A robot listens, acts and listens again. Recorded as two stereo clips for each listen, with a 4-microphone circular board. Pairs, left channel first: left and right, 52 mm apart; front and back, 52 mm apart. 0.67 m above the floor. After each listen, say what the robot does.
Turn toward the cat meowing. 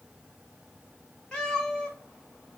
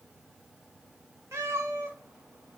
Turn 165° left.
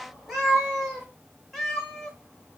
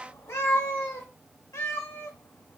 Facing the cat meowing, 1 to 2 m away.